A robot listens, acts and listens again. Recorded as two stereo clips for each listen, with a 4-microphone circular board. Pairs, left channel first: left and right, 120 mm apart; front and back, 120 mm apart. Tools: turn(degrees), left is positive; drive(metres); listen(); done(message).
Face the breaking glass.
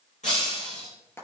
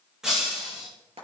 turn(degrees=95)
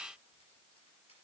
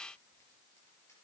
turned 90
done("I heard breaking glass from this way, but can't make it out now.")